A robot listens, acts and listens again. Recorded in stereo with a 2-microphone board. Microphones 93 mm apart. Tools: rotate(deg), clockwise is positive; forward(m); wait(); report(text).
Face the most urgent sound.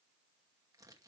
wait()
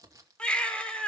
rotate(-30)
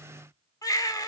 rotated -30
rotate(-135)
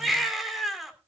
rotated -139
report("Facing the baby crying.")